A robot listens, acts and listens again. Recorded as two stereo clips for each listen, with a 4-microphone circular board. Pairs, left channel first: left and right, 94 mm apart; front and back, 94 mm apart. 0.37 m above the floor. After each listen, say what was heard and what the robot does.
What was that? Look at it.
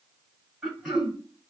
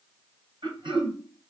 The throat clearing: 175° right. Turn 175° right.
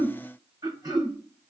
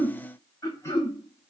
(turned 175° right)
The throat clearing is now 55° right. Turn 55° right.
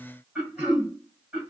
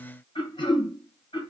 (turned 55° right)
The throat clearing is now 10° right. Turn 10° right.
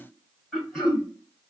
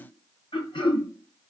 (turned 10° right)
Facing the throat clearing, 1 to 2 m away.